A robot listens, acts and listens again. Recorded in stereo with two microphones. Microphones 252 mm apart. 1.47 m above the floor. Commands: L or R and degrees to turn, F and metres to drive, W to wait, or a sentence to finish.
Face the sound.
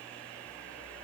W
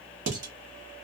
R60
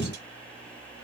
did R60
W
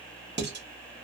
R45
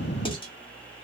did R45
L20
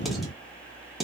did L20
Facing the dishes clattering.